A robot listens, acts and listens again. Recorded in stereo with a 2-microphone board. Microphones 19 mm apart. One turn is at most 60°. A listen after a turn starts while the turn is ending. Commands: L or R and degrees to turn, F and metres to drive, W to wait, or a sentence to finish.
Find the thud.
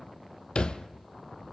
L45
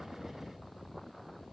W
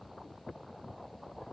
I heard a thud, but can't make it out now. It was about straight ahead or 90° left.